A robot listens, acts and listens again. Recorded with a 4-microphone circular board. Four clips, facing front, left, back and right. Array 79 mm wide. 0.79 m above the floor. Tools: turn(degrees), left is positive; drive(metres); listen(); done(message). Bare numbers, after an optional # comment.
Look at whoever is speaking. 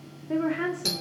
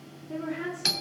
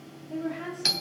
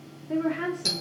# The woman speaking: 25° right.
turn(-25)
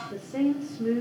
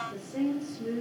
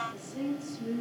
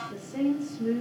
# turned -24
# The woman speaking is now 10° right.
turn(-10)
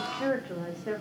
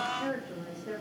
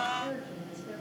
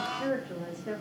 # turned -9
# The woman speaking is now 10° right.
turn(-10)
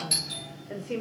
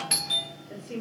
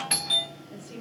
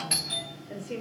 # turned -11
# The woman speaking is now 10° right.
turn(-10)
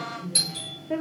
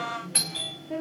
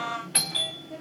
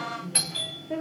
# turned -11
done("Found it: a woman speaking, straight ahead.")